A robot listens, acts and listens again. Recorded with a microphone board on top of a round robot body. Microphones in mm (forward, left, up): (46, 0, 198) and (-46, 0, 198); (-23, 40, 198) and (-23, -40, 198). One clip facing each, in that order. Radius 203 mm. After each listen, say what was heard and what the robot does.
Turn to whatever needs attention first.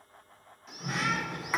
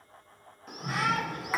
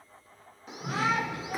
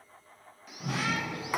The shout: 145° left. Turn 145° left.
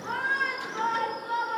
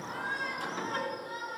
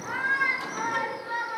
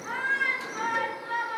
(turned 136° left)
The shout is now 10° left. Turn 10° left.
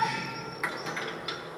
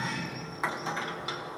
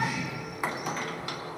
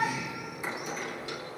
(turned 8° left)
Keep listening.
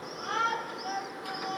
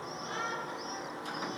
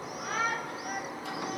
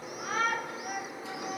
Found it: a shout, straight ahead.